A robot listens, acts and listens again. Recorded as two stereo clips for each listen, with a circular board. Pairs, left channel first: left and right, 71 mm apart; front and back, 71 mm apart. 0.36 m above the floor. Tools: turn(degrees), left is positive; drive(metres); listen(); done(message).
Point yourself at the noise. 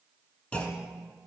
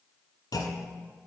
turn(degrees=15)
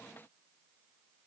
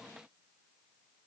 done("I heard a clunk from this way, but can't make it out now.")